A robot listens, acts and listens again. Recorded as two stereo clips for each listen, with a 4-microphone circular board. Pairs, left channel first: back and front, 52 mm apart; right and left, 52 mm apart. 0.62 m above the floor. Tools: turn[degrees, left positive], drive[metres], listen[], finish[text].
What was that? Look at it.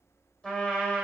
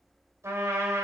Thought: The trumpet: 105° left.
Action: turn[105]
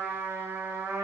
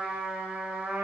Thought: The trumpet is now 35° left.
Action: turn[35]
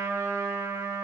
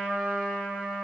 Thought: The trumpet is now 20° left.
Action: turn[20]
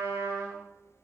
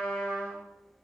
Action: finish[Facing the trumpet, 1 to 2 m away.]